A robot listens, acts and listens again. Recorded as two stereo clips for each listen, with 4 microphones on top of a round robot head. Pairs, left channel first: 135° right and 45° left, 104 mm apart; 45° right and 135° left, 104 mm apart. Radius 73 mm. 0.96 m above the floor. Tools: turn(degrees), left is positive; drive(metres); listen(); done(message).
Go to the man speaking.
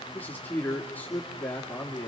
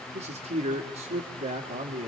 turn(degrees=150)
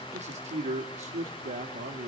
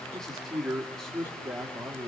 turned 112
turn(degrees=40)
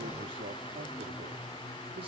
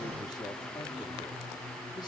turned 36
listen()
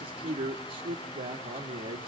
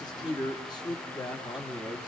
drive(metres=1.0)
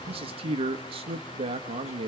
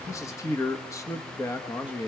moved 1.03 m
turn(degrees=15)
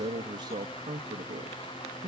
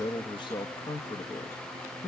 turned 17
drive(metres=1.0)
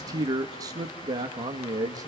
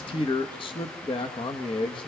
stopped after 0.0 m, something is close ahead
turn(degrees=-10)
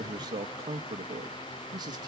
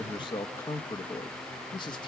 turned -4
done("I am next to the man speaking.")